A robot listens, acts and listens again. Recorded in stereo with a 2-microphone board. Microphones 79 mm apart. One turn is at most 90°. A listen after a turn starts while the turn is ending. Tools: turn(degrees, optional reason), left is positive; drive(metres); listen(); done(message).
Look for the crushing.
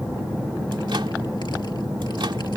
listen()
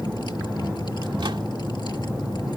listen()
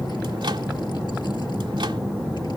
done("I can't make out crushing.")